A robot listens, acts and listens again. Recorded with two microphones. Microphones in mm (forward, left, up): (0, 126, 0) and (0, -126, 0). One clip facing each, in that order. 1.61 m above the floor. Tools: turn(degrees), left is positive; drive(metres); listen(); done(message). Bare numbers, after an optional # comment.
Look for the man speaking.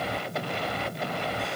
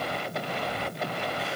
listen()
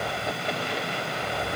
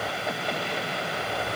listen()
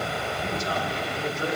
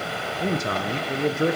# The man speaking: about 65° right or 115° right.
turn(-65)
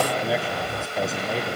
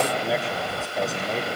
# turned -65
done("Found it: a man speaking, straight ahead.")